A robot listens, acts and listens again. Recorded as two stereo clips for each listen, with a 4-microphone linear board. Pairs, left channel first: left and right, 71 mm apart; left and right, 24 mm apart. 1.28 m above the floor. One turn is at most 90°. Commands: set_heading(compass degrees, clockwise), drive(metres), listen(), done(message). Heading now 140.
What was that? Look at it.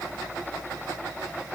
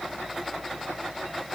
listen()
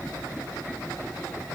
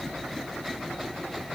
listen()
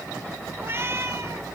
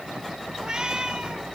set_heading(180)
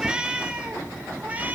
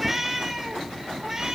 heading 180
set_heading(205)
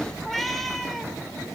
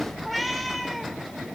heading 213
done("Facing the cat meowing.")